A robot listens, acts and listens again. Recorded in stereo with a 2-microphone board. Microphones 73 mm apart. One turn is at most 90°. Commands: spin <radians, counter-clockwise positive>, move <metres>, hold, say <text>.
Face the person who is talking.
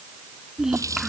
spin -0.52
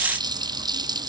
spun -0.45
hold
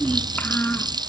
spin 0.35
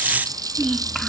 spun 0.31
say Facing the child speaking.